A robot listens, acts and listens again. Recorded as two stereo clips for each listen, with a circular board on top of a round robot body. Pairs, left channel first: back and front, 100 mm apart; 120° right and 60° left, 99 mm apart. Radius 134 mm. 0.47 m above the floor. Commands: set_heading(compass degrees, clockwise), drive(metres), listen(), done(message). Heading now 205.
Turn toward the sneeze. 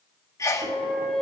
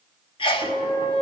set_heading(330)
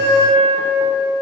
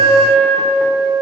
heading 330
done("I heard a sneeze from this way, but can't make it out now.")